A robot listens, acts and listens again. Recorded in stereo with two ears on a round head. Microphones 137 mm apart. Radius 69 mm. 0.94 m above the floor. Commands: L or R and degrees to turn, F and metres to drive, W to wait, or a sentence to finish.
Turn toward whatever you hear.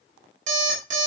R50
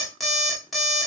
Found it: an alarm clock, straight ahead, 1 to 2 m away.